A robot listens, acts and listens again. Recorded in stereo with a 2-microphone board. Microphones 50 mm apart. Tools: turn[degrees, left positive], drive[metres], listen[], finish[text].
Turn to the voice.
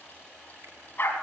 Action: listen[]
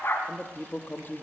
Thought: The man speaking: about 40° left or 140° left.
Action: turn[40]
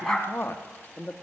Thought: So it is at 95° left.
Action: turn[95]
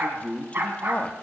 Thought: The man speaking is now 35° left.
Action: turn[35]
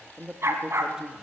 Thought: The man speaking is now 15° right.
Action: turn[-15]
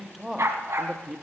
Action: finish[Found it: a man speaking, straight ahead, 1 to 2 m away.]